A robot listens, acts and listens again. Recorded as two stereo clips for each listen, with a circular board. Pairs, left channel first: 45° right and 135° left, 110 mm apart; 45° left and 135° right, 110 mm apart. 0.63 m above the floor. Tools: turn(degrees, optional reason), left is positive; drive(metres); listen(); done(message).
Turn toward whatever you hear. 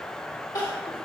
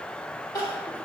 done("Facing the crying, 1 to 2 m away.")